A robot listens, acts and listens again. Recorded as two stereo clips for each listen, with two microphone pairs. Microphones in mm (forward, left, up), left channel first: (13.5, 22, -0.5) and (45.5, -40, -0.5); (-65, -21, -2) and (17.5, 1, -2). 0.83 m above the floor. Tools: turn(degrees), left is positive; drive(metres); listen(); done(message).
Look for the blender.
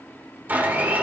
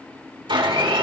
done("Facing the blender.")